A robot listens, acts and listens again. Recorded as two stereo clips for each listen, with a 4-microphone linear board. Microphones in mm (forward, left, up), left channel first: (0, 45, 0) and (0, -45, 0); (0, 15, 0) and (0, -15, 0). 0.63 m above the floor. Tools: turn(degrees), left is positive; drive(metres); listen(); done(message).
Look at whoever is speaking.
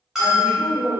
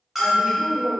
turn(degrees=-60)
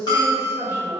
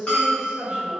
turn(degrees=-35)
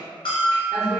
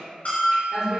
done("Facing the woman speaking, 1 to 2 m away.")